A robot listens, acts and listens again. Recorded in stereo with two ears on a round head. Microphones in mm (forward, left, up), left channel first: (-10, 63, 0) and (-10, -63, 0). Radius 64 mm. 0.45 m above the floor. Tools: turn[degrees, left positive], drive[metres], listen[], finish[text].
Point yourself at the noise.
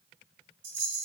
Thought: The rattle: about 60° right or 120° right.
Action: turn[-60]
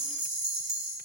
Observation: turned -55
Thought: So it is at 40° right.
Action: turn[-40]
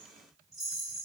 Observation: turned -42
Action: finish[Found it: a rattle, straight ahead.]